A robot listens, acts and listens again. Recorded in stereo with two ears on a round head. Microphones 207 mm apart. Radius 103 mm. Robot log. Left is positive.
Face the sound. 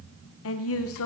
note: The woman speaking: about 60° left or 120° left.
cmd yaw +60
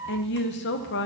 note: So it is at 50° left.
cmd yaw +50
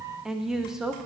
end: Facing the woman speaking.